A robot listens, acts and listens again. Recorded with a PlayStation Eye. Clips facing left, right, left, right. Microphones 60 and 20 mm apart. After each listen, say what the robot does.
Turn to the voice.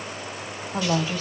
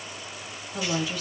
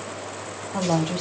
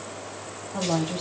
Turn 40° left.
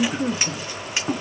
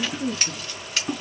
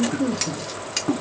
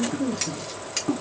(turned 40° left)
Turn 90° left.
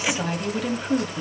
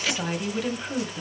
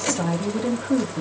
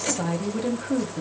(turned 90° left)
Facing the woman speaking, 1 to 2 m away.